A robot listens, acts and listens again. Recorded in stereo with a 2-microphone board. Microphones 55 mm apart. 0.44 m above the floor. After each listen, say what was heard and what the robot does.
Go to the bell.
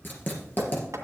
Keep listening.
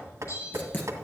The bell: about 75° left or 105° left. Turn 75° left.
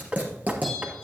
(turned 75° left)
Keep listening.
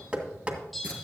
Drive 1.0 m forward.
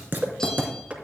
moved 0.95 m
Keep listening.
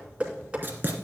Keep listening.
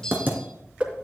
The bell is now 15° left. Turn 15° left.
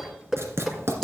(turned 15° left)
Keep listening.
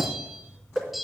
Drive 1.0 m forward.
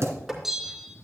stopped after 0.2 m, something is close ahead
Arrived at the bell, straight ahead.